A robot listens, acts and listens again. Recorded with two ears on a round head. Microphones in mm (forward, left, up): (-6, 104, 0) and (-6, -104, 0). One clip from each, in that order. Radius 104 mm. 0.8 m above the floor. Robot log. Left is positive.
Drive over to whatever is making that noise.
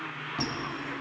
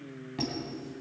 cmd yaw +30
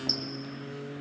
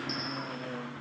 note: So it is at 140° left.
cmd yaw +140
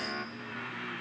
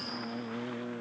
cmd idle
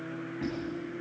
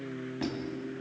note: The squeak is now 45° right.
cmd yaw -45
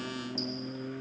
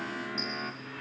note: The squeak is now 25° left.
cmd yaw +25
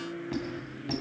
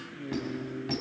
cmd fwd 1.0
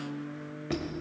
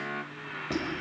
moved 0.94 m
cmd fwd 1.0
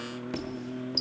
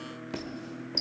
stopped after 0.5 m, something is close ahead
end: Arrived at the squeak, straight ahead.